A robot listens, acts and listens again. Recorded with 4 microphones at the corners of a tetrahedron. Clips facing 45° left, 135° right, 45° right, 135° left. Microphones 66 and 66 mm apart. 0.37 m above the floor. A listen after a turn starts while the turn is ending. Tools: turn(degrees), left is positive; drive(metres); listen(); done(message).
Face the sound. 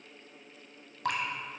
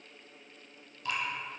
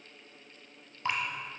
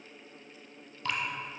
turn(degrees=20)
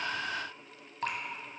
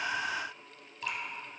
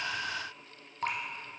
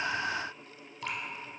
done("Facing the dripping.")